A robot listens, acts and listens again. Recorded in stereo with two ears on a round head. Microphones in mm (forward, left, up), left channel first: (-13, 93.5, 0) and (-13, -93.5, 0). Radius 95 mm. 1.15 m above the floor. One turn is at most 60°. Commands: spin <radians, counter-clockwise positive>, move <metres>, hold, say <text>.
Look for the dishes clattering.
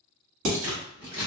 spin -1.05
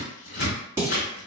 spin -0.17
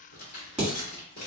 say Found it: dishes clattering, straight ahead, 1 to 2 m away.